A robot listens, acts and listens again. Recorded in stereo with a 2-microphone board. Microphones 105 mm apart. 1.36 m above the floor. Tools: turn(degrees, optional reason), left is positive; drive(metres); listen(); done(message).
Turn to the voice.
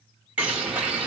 listen()
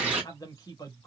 turn(degrees=35, reason="The man speaking: about 35° left or 145° left.")
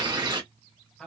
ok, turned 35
done("Facing the man speaking.")